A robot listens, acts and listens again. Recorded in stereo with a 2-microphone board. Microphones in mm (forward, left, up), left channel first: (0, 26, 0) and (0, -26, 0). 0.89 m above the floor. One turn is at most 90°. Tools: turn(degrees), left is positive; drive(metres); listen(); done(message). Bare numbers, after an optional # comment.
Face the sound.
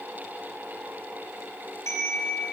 # The chime: about 65° left or 115° left.
turn(65)
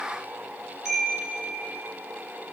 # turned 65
done("Found it: a chime, straight ahead.")